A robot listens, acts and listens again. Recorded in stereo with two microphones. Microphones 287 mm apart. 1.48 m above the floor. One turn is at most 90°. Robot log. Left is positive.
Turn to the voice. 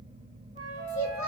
note: The child speaking: about 75° left or 105° left.
cmd yaw +75
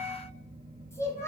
note: So it is at 10° left.
cmd yaw +10
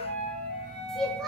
end: Found it: a child speaking, straight ahead, under 1 m away.